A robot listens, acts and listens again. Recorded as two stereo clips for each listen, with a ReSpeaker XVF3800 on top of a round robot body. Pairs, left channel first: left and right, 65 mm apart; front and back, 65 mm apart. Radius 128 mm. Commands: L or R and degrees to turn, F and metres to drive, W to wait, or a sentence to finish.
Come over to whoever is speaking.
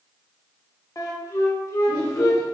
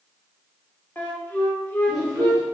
L100
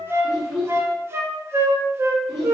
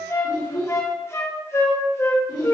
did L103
F1.0
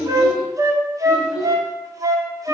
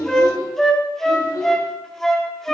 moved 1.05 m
F1.0
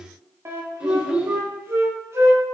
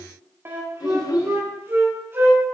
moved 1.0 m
R15
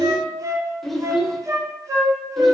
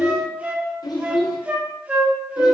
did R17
F1.0
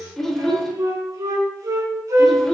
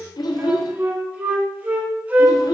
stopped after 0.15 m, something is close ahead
I am next to the child speaking.